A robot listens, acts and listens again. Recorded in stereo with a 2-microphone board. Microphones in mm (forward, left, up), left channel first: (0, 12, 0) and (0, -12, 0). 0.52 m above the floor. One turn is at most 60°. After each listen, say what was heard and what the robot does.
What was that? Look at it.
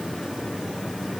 Keep listening.
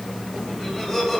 Turn 30° left.
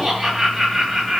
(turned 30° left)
So it is at 40° right. Turn 40° right.
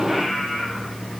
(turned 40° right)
The laughter is now 20° right. Turn 20° right.
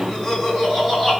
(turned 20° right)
The laughter is now 10° right. Turn 10° right.
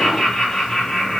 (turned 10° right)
Found it: laughter, straight ahead, 2 to 4 m away.